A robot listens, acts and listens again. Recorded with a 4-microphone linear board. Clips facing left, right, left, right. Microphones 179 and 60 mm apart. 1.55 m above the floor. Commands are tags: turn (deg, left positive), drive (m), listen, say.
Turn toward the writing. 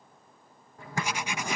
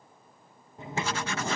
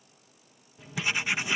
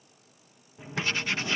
<turn deg="30"/>
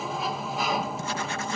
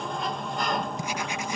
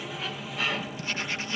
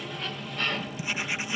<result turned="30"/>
<turn deg="-15"/>
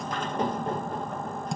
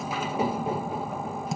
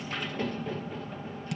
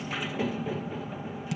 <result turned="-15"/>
<say>Found it: writing, straight ahead.</say>